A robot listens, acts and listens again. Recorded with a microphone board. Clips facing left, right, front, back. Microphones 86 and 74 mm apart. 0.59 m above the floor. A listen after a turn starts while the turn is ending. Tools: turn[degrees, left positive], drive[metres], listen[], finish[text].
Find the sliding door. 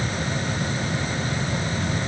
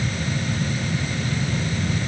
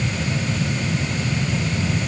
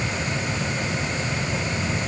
Action: listen[]
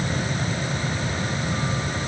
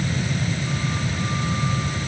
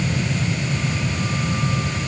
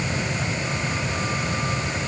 Action: listen[]
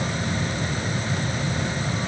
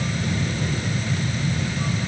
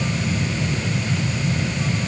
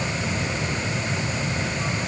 Action: finish[I can't make out a sliding door.]